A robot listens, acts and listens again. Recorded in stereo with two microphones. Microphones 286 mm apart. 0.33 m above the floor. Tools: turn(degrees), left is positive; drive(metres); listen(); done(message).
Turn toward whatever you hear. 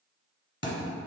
turn(degrees=40)
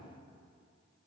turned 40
listen()
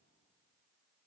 done("I heard a thud, but can't make it out now. It was about straight ahead or 100° left.")